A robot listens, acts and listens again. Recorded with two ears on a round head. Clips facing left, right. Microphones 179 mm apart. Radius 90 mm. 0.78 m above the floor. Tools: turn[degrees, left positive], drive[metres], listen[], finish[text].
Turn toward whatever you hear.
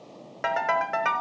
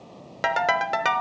Thought: The ringtone: about 45° right or 135° right.
Action: turn[-45]
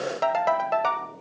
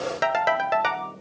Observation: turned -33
Thought: So it is at 15° right.
Action: turn[-15]
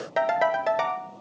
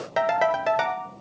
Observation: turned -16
Action: finish[Found it: a ringtone, straight ahead, under 1 m away.]